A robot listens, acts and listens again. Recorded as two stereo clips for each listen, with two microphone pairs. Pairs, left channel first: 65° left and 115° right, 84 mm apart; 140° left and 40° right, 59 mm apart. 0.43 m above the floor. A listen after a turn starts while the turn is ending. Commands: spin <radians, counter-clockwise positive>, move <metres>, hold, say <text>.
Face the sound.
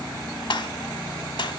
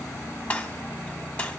spin 1.22
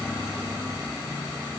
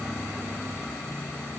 say I heard a gunshot from this way, but can't make it out now.